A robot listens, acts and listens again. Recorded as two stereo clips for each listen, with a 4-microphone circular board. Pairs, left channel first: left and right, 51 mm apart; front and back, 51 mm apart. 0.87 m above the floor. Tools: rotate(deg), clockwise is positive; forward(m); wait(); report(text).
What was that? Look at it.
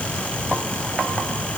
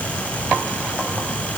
wait()
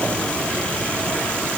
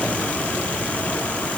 wait()
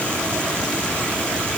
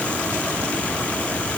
report("I can't make out anything.")